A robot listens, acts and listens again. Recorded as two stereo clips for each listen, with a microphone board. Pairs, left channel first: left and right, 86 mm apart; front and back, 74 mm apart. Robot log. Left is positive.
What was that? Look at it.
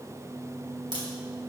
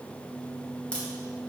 note: The crack: 75° right.
cmd yaw -75
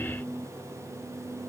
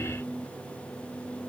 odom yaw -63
note: Nothing new. It was at 10° right.
cmd yaw -10
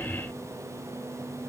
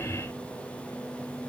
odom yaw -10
end: Facing where the crack came from. I can't hear it now.